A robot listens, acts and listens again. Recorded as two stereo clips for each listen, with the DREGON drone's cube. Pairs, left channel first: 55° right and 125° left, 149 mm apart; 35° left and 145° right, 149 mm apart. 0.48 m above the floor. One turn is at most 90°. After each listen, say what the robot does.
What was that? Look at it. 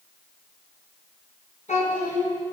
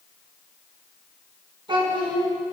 Turn 90° right.
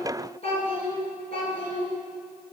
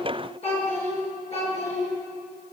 Found it: a child speaking, straight ahead.